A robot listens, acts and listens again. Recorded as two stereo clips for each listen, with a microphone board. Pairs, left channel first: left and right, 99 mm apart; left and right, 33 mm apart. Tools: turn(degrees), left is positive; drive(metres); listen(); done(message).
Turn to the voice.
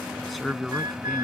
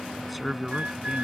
turn(degrees=30)
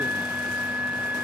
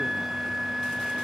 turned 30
listen()
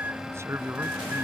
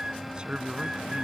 turn(degrees=-30)
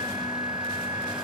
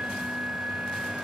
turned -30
listen()
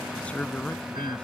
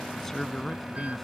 turn(degrees=10)
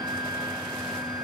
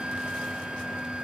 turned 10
listen()
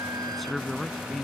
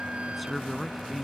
done("Found it: a man speaking, straight ahead.")